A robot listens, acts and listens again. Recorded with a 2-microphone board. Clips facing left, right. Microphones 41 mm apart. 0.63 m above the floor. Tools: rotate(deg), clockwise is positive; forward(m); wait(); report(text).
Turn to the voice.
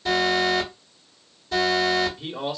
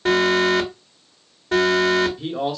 rotate(-30)
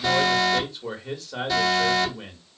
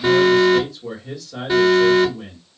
rotate(-145)
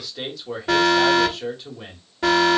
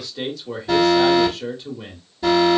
rotate(-10)
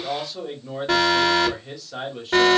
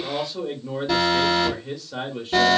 report("Found it: a man speaking, straight ahead, 1 to 2 m away.")